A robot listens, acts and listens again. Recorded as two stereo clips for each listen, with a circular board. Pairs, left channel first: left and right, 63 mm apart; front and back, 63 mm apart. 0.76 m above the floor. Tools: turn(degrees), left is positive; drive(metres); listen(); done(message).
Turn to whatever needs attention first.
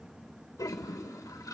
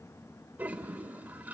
listen()
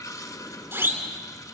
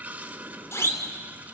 turn(degrees=-40)
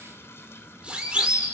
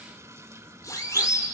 turn(degrees=-20)
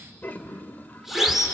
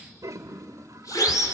done("Found it: a siren, straight ahead, 2 to 4 m away.")